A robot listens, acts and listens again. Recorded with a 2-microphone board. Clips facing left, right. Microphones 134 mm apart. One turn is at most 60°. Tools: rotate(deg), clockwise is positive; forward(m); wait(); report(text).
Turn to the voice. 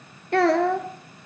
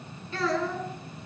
rotate(-60)
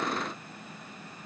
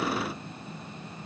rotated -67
wait()
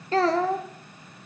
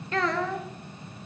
rotate(-35)
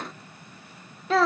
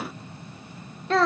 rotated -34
report("Facing the child speaking, under 1 m away.")